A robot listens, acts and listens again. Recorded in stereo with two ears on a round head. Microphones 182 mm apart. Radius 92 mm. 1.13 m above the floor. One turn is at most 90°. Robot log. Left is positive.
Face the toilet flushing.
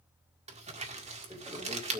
note: The toilet flushing: about 15° right or 165° right.
cmd yaw -15
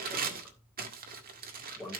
end: Facing the toilet flushing.